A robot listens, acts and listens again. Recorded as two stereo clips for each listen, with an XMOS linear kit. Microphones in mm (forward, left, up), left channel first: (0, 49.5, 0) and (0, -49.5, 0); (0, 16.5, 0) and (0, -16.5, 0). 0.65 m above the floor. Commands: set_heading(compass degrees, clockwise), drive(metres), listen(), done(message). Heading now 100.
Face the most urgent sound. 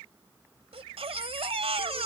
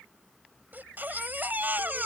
set_heading(190)
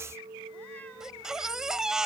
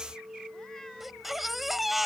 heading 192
done("Found it: a baby crying, straight ahead.")